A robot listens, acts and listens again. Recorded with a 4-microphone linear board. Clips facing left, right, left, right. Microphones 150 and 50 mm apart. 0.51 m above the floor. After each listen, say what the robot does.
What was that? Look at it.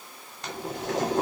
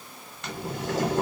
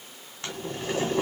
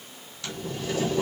Turn 40° left.
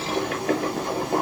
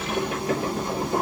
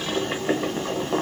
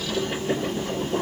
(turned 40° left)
Turn 100° left.
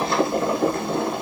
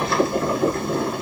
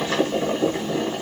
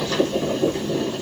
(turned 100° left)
Turn 30° left.
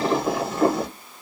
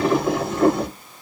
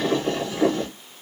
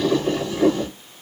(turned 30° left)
Facing the boiling.